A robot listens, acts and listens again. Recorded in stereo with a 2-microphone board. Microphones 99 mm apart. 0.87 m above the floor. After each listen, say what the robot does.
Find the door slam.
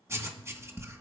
Keep listening.
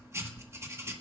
Keep listening.
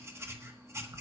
I can't make out a door slam to turn to.